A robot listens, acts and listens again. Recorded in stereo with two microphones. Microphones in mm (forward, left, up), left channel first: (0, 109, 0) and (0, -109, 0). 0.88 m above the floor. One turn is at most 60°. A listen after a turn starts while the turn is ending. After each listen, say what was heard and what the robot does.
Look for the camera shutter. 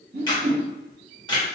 The camera shutter: about 20° left or 160° left. Turn 20° left.
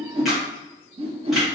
Keep listening.
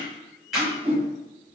Facing the camera shutter.